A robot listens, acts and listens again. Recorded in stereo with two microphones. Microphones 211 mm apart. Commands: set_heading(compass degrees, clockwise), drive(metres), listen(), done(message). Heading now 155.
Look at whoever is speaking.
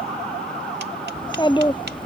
set_heading(135)
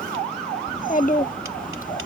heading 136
set_heading(356)
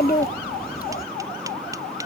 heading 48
set_heading(358)
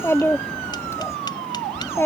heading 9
set_heading(354)
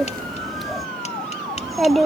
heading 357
done("Facing the child speaking.")